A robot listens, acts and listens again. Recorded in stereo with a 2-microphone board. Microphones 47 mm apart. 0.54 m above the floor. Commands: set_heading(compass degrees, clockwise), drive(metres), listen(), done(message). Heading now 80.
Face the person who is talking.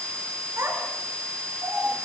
set_heading(150)
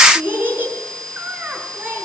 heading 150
set_heading(190)
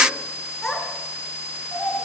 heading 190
done("Found it: a child speaking, straight ahead, over 4 m away.")